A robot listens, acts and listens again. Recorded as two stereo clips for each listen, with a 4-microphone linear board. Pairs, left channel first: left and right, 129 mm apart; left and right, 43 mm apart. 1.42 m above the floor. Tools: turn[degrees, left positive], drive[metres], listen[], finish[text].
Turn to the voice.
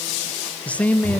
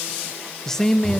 Action: turn[30]
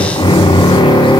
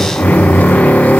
Action: listen[]
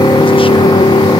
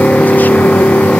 Action: listen[]
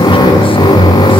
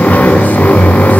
Action: finish[I heard a man speaking, but can't make it out now. It was about 20° right or 140° left.]